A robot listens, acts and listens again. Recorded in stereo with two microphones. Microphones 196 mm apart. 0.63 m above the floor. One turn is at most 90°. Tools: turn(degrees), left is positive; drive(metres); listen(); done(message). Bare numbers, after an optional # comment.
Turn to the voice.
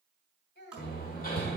# The child speaking: about 65° left or 115° left.
turn(65)
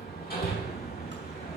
listen()
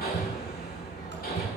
listen()
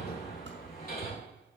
done("I heard a child speaking, but can't make it out now. It was about straight ahead or 50° left.")